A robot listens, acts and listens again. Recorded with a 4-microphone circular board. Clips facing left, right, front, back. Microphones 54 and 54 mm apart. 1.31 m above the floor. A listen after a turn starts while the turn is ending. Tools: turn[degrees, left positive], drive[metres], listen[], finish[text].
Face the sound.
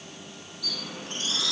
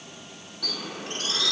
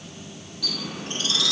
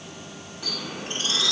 Thought: The bird: 120° right.
Action: turn[-120]
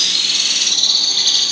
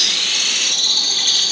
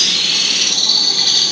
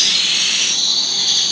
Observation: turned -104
Thought: The bird is now 20° right.
Action: turn[-20]
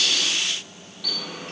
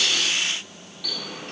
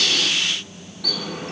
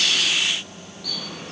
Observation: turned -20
Action: finish[Found it: a bird, straight ahead.]